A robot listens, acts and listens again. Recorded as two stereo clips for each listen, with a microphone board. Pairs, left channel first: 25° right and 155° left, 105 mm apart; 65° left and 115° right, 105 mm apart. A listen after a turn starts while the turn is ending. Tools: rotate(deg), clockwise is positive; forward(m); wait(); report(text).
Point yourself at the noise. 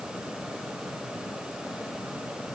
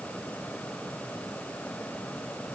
wait()
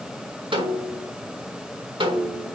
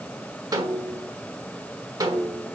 rotate(165)
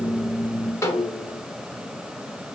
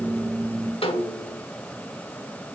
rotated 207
rotate(-40)
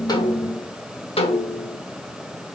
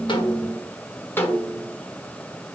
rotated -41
report("Found it: a snare drum, straight ahead.")